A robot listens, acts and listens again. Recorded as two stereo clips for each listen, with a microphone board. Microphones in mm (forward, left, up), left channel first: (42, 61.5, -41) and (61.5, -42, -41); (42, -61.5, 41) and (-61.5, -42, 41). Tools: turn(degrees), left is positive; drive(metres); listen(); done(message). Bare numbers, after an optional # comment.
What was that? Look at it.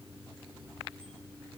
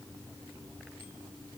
listen()
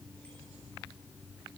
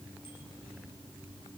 listen()
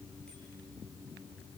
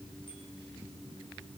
done("I can't make out anything.")